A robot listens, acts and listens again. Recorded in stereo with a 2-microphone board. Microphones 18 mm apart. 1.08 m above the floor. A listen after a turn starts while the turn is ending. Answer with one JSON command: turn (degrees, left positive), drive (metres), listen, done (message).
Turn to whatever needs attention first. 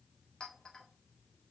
{"listen": true}
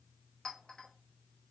{"listen": true}
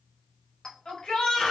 {"turn": 90}
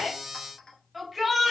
{"done": "Found it: a shout, straight ahead, 1 to 2 m away."}